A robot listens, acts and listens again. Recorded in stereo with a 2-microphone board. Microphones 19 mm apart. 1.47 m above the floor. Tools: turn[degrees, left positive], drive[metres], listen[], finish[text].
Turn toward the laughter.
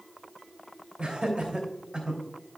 Thought: The laughter: about 65° right or 115° right.
Action: turn[-65]
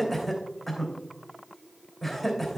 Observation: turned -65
Action: finish[Found it: laughter, straight ahead, 2 to 4 m away.]